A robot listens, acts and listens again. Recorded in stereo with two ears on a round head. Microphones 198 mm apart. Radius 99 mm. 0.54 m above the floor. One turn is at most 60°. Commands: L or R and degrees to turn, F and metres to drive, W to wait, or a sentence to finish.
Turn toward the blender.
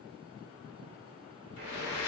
L60
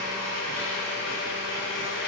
L55
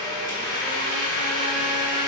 L20
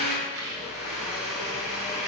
Found it: a blender, straight ahead.